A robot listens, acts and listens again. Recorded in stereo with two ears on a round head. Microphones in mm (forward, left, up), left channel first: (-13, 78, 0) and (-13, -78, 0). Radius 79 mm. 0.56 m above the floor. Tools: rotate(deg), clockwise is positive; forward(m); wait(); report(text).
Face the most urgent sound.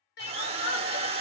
rotate(-65)
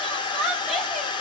report("Found it: crying, straight ahead.")